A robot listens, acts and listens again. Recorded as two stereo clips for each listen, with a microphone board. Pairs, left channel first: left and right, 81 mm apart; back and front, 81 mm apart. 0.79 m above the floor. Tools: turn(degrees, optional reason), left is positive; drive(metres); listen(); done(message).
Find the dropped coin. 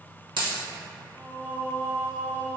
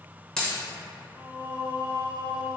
turn(degrees=-100, reason="The dropped coin: 100° right.")
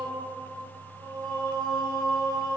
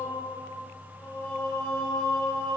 done("Facing where the dropped coin came from. I can't hear it now.")